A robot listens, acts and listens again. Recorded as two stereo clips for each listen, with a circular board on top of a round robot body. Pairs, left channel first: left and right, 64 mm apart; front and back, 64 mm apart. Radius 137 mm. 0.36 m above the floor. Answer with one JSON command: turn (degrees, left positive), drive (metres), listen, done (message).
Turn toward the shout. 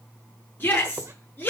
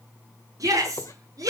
{"turn": 145}
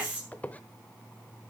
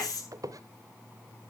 {"turn": -20}
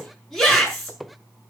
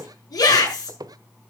{"done": "Found it: a shout, straight ahead, over 4 m away."}